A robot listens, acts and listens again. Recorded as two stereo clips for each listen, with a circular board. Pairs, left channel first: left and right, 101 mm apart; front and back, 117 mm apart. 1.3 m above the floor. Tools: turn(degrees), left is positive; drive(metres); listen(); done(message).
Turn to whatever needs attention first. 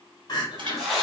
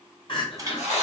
turn(degrees=45)
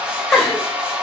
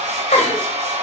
done("Found it: crying, straight ahead, 1 to 2 m away.")